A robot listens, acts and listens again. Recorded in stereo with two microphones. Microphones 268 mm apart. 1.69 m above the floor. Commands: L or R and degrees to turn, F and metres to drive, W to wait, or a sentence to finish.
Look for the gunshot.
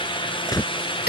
L30
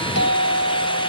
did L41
W
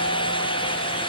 I heard a gunshot, but can't make it out now. It was about 30° right or 125° left.